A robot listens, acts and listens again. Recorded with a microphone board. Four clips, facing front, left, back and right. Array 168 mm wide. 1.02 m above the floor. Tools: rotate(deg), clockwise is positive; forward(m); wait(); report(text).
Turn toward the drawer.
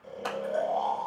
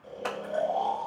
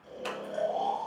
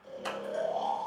wait()
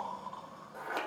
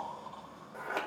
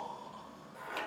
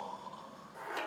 wait()
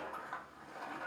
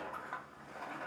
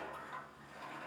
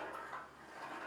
report("I can't make out a drawer to turn to.")